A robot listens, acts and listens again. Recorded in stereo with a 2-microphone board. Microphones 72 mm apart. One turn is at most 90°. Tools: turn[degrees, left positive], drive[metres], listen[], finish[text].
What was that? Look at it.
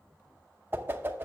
Thought: The whoosh: about 30° right or 150° right.
Action: turn[-30]
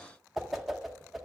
Action: finish[Found it: a whoosh, straight ahead.]